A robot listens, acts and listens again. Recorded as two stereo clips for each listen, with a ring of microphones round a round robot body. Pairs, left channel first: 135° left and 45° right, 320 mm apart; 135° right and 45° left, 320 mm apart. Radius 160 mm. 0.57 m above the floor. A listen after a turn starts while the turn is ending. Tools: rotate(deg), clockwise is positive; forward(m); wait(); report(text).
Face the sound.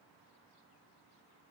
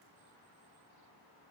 wait()
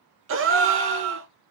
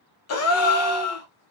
rotate(95)
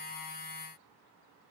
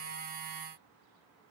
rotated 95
report("Facing where the gasp came from. I can't hear it now.")